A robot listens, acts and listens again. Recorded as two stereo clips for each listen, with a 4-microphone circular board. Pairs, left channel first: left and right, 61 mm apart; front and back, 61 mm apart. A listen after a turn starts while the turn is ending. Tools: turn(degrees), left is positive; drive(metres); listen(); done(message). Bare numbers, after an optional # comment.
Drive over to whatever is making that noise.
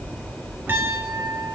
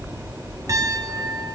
# The piano: 145° right.
turn(-145)
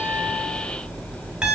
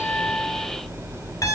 # The piano is now 15° right.
turn(-15)
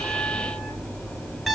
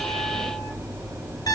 drive(1.0)
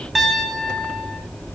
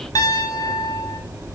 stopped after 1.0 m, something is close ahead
done("Blocked. The piano is further on, straight ahead.")